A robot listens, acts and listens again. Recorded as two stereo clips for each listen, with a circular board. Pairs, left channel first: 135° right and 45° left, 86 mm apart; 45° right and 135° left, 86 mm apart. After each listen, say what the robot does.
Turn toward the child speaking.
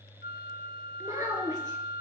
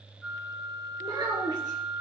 Turn 95° left.
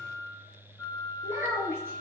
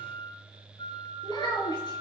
Turn 15° right.
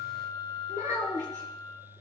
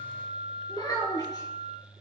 Facing the child speaking.